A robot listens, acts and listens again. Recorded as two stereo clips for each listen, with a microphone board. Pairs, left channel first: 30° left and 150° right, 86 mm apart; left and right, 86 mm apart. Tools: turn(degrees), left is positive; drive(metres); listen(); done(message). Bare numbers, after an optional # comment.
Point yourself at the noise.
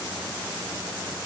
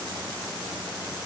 listen()
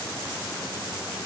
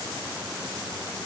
listen()
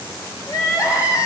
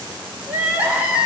# The crying: 20° right.
turn(-20)
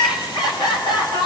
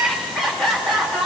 done("Found it: crying, straight ahead.")